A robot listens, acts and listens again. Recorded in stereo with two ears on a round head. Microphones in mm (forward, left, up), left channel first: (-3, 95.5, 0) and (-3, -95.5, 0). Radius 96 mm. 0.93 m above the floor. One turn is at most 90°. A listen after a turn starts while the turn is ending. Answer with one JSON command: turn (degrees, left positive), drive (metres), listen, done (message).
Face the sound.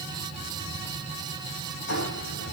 {"turn": 60}
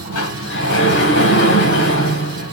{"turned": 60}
{"turn": 60}
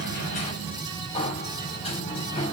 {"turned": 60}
{"turn": 25}
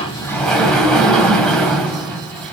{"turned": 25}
{"done": "Found it: a sliding door, straight ahead, 2 to 4 m away."}